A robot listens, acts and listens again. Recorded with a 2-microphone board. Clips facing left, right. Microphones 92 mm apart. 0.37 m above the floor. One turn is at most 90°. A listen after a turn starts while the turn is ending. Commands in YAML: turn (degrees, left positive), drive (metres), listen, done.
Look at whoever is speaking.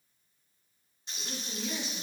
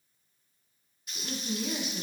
turn: -50
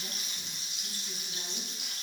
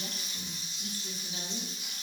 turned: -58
listen: true
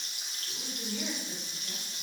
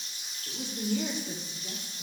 turn: -70
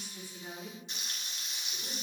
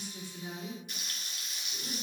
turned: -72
done: "Facing the woman speaking, over 4 m away."